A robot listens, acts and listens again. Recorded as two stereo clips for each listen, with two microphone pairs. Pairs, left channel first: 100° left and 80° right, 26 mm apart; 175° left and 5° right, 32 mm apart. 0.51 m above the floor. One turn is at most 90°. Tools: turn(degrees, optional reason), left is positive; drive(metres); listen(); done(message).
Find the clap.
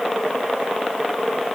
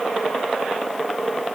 listen()
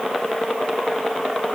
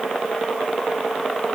listen()
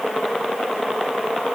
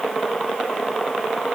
done("I can't make out a clap.")